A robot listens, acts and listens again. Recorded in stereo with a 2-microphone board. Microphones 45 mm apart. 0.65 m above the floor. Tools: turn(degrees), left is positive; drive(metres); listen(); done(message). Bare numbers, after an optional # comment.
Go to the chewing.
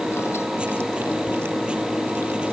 listen()
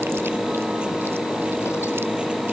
listen()
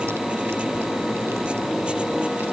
done("I can't make out chewing.")